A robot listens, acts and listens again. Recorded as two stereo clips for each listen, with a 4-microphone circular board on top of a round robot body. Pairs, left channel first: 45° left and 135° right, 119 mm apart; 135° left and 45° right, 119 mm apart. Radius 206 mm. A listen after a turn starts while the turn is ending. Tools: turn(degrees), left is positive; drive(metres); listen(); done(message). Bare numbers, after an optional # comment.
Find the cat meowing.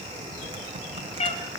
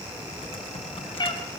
# The cat meowing: 80° left.
turn(80)
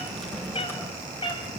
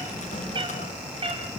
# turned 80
done("Facing the cat meowing, 2 to 4 m away.")